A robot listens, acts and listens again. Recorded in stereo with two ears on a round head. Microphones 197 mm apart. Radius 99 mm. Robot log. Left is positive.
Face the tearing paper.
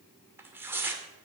cmd yaw -30
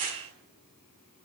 note: So it is at 135° right.
cmd yaw -135
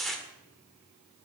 end: Facing the tearing paper, 1 to 2 m away.